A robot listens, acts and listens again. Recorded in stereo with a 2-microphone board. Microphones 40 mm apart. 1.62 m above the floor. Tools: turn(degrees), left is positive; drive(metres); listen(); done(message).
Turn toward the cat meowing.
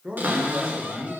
listen()
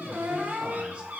listen()
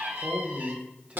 done("I can't make out a cat meowing, only a cupboard door and a man speaking.")